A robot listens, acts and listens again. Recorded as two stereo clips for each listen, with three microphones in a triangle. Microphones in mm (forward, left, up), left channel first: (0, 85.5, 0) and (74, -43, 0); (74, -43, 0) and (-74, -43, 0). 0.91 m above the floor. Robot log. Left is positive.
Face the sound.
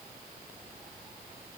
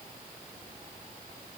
cmd idle
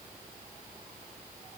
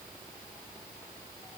cmd idle
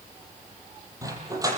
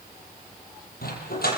note: The dog barking: 10° left.
cmd yaw +10
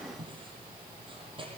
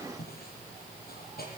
cmd idle
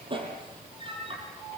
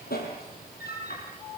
end: Found it: a dog barking, straight ahead.